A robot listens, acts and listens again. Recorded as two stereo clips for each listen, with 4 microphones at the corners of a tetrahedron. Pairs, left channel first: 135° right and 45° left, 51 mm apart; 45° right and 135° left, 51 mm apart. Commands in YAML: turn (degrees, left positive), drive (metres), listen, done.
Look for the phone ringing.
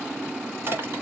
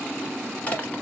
listen: true
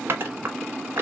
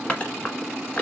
listen: true
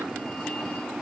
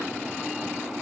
done: "I can't make out a phone ringing to turn to."